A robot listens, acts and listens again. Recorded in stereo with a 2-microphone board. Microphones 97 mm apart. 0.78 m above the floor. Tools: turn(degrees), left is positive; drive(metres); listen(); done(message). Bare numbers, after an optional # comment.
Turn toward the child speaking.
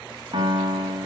listen()
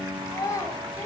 # The child speaking: about 35° left or 145° left.
turn(35)
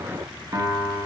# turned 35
listen()
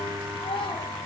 # So it is at 110° left.
turn(110)
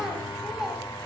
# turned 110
done("Found it: a child speaking, straight ahead.")